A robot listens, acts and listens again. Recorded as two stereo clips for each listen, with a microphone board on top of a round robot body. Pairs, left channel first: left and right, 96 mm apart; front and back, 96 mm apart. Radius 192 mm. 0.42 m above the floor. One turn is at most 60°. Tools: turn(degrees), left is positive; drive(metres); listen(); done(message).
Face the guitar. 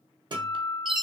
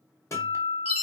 turn(degrees=-55)
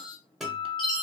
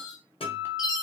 done("Facing the guitar, 1 to 2 m away.")